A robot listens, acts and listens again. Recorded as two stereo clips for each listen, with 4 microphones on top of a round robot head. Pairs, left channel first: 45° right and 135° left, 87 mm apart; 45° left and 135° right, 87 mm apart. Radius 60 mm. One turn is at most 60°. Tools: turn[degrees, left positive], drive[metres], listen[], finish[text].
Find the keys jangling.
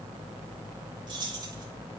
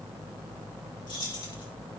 Thought: The keys jangling: 90° left.
Action: turn[60]
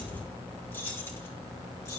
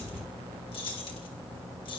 Thought: The keys jangling is now 10° left.
Action: turn[10]
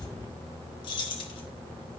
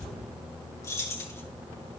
Thought: The keys jangling is now 15° right.
Action: turn[-15]
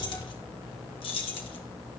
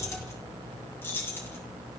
Thought: The keys jangling is now 20° right.
Action: turn[-20]
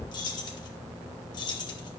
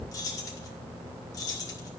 Action: finish[Found it: keys jangling, straight ahead.]